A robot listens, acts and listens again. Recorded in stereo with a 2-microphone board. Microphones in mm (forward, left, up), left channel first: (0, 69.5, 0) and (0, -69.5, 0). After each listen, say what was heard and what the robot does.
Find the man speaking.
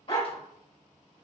Keep listening.
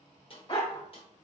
Keep listening.
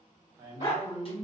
The man speaking: about 25° right or 155° right. Turn 25° right.
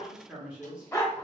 So it is at 10° right. Turn 10° right.
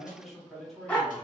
Facing the man speaking.